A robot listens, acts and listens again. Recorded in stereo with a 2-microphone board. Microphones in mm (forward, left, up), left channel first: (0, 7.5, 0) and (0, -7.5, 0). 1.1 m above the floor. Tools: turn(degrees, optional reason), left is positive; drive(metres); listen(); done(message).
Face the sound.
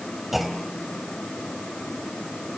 turn(degrees=-30)
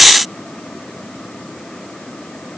listen()
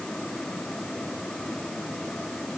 done("I heard a clunk, but can't make it out now. It was about 20° left or 140° right.")